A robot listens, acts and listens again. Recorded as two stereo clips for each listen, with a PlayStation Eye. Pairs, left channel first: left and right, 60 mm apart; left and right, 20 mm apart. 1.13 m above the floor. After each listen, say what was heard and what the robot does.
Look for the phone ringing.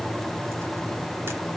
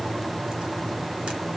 Keep listening.
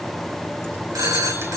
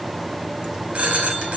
The phone ringing: about 70° right or 110° right. Turn 70° right.
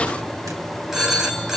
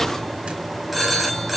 Facing the phone ringing, over 4 m away.